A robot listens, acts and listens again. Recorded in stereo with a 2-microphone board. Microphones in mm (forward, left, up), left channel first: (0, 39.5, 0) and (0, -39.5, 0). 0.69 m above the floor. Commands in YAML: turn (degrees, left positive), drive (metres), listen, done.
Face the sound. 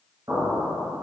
turn: -45
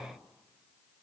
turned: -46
listen: true
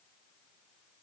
done: "I heard an explosion, but can't make it out now. It was about straight ahead or 90° right."